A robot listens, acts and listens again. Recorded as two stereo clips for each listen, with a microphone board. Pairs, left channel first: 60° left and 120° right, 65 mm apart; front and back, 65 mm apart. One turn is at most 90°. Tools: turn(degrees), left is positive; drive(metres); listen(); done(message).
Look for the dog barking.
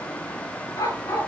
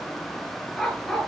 turn(degrees=85)
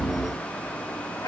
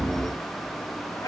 turn(degrees=30)
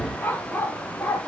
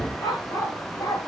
done("Facing the dog barking.")